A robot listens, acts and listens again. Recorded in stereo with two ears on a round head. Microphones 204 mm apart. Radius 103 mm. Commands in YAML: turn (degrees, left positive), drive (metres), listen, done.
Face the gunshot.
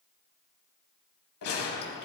turn: 90
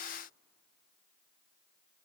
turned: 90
done: "Facing where the gunshot came from. I can't hear it now."